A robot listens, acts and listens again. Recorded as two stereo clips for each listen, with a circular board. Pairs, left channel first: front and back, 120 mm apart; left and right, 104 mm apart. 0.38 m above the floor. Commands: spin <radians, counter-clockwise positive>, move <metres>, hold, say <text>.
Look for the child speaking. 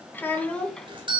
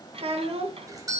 spin -1.48
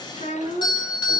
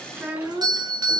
spin -0.26
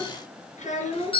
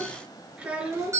spin -0.26
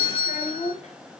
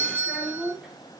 spin -0.17
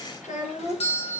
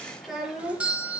say Facing the child speaking.